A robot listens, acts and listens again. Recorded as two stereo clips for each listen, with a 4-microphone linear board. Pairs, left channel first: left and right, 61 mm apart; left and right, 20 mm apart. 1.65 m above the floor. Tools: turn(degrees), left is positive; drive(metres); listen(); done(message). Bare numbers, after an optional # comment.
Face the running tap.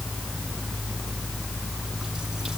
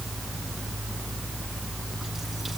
listen()
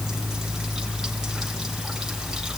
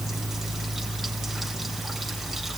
listen()
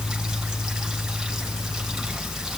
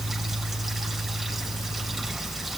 done("I can't make out a running tap.")